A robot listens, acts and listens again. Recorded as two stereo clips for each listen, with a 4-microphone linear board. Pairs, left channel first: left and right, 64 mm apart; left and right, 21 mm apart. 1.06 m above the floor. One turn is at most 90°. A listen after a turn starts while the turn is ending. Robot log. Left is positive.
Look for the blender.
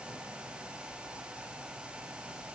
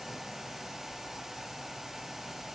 cmd idle
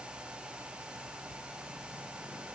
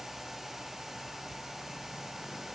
cmd idle
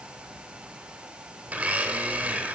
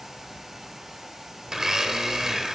note: The blender: about 20° right or 160° right.
cmd yaw -20
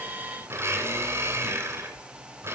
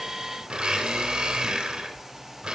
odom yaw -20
note: So it is at 140° right.
cmd yaw -90
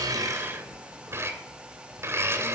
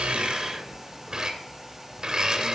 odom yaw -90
note: The blender is now 40° right.
cmd yaw -40
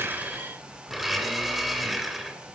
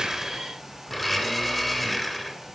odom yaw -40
end: Facing the blender.